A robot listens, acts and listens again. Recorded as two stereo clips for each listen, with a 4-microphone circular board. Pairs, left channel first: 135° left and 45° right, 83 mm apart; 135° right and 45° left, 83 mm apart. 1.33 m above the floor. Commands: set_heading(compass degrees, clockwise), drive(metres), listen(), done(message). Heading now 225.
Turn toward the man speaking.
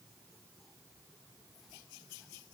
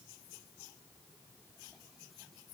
listen()
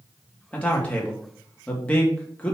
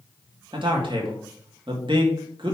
set_heading(165)
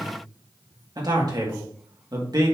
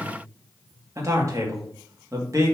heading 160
done("Found it: a man speaking, straight ahead, 1 to 2 m away.")